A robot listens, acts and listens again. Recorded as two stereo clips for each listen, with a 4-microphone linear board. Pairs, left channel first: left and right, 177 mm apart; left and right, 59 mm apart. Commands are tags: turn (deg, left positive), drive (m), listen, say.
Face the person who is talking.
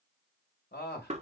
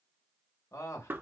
<turn deg="90"/>
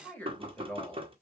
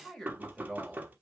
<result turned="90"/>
<turn deg="10"/>
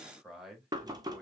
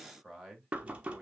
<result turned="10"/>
<say>Found it: a man speaking, straight ahead, 1 to 2 m away.</say>